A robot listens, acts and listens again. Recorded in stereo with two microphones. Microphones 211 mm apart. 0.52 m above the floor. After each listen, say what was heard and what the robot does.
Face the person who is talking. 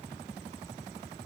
Keep listening.
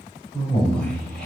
Turn 30° left.
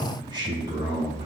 So it is at 25° right. Turn 25° right.
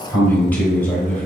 The man speaking is now 10° left. Turn 10° left.
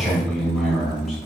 Found it: a man speaking, straight ahead, 1 to 2 m away.